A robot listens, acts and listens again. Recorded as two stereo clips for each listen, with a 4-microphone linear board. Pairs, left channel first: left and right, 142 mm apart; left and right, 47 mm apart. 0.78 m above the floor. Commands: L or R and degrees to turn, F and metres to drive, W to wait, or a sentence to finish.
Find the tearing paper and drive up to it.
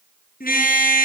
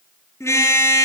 W
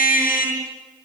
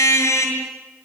W
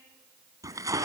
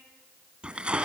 R20
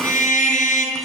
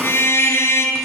W
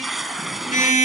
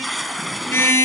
F1.0
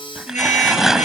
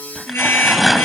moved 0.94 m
F1.0
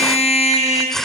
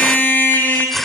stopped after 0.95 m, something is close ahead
Arrived at the tearing paper, straight ahead.